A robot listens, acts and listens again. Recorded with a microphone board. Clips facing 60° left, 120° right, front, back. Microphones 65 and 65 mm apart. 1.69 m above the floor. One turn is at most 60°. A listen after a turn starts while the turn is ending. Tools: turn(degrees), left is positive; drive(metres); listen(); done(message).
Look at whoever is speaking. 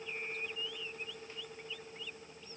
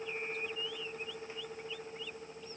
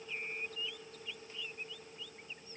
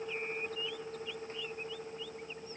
listen()
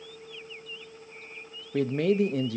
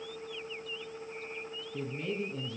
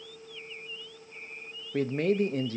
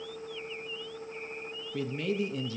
turn(degrees=45)
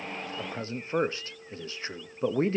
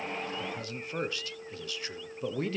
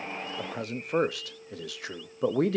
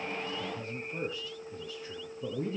done("Found it: a man speaking, straight ahead, under 1 m away.")